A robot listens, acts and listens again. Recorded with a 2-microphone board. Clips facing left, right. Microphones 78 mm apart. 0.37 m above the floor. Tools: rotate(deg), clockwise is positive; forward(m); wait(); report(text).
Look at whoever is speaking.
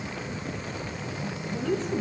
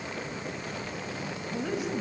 rotate(30)
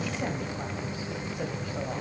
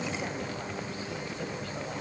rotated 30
wait()
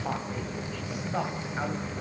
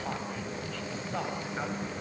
rotate(-15)
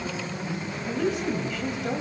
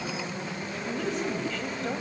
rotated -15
report("Facing the woman speaking.")